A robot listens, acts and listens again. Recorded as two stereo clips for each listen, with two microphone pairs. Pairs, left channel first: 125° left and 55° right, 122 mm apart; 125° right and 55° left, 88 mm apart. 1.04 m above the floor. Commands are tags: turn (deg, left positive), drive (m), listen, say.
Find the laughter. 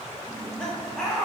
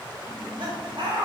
<turn deg="35"/>
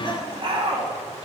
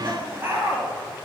<turn deg="-15"/>
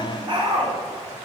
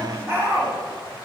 <turn deg="-10"/>
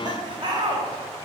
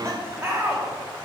<turn deg="-10"/>
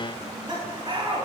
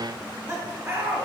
<say>Found it: laughter, straight ahead.</say>